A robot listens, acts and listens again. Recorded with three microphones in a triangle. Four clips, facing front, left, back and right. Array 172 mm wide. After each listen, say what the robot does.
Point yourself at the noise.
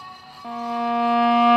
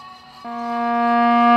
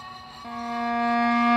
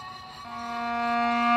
Turn 75° left.
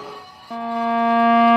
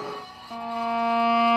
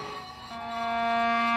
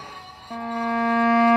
Turn 15° right.
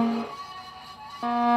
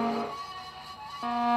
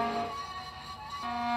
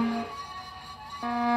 Found it: a violin, straight ahead.